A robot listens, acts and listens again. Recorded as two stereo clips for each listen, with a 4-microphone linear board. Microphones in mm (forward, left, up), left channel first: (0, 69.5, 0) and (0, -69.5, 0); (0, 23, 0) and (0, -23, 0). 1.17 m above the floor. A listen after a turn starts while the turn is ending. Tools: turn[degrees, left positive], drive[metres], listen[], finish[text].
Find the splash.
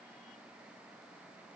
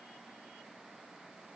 Action: listen[]
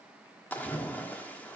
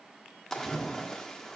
Action: turn[30]
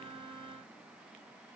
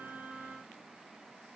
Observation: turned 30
Action: listen[]
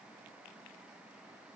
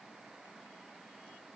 Action: finish[I heard a splash, but can't make it out now. It was about 20° right or 140° left.]